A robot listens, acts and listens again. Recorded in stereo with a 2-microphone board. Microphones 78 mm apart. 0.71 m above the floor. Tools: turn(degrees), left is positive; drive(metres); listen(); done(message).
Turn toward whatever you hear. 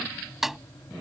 turn(degrees=-30)
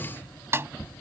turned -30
turn(degrees=-145)
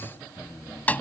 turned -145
turn(degrees=20)
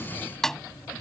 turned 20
done("Found it: a snare drum, straight ahead.")